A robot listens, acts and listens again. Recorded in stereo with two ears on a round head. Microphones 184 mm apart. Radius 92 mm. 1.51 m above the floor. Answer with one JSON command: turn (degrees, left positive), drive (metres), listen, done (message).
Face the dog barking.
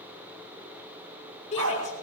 {"turn": -90}
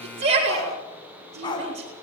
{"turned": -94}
{"turn": 25}
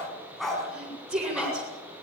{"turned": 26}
{"done": "Found it: a dog barking, straight ahead, over 4 m away."}